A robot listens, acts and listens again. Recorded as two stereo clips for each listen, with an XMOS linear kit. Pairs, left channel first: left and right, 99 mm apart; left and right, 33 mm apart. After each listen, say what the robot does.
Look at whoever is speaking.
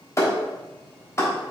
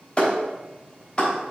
Keep listening.
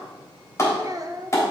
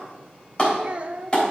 Turn 35° right.
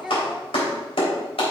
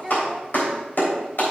Found it: a child speaking, straight ahead, under 1 m away.